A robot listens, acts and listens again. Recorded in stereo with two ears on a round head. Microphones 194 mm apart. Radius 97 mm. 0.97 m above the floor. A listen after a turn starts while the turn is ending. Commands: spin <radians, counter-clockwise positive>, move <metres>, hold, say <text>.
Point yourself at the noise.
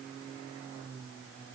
hold
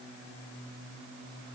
hold
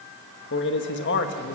spin 1.05
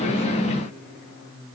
hold
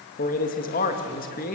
spin 0.79
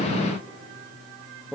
say Facing the man speaking.